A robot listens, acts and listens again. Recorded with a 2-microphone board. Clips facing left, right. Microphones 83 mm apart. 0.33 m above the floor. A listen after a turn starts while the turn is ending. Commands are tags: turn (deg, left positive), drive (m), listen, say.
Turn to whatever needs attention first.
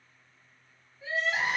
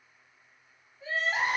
<turn deg="-40"/>
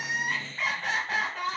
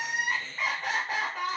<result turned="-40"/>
<say>Found it: crying, straight ahead, 1 to 2 m away.</say>